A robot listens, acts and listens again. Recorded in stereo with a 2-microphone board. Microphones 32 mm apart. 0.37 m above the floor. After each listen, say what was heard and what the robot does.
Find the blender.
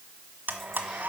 The blender: about 70° right or 110° right. Turn 70° right.
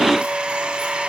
So it is at 40° right. Turn 40° right.
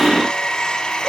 The blender is now 20° left. Turn 20° left.
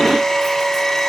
Facing the blender, 1 to 2 m away.